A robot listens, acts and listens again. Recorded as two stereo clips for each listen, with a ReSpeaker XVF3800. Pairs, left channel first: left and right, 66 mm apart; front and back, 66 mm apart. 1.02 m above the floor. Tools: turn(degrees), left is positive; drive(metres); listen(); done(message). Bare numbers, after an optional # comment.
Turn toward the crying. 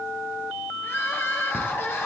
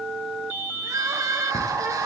# The crying: 145° left.
turn(145)
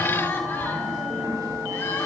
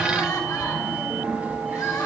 listen()
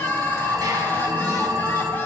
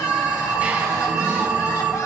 listen()
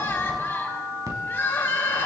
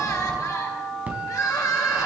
# The crying is now 35° left.
turn(35)
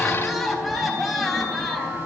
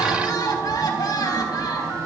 done("Found it: crying, straight ahead, 2 to 4 m away.")